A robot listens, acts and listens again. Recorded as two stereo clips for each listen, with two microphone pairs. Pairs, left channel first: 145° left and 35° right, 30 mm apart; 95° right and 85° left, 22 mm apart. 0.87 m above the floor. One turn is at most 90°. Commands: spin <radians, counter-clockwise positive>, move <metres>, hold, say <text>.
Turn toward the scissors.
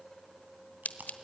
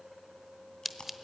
spin 1.57
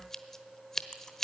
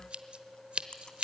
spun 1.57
spin 1.22
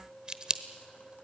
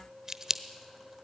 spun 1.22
spin 0.44
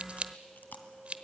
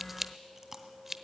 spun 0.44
spin 0.17
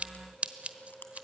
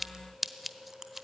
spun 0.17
say Found it: scissors, straight ahead.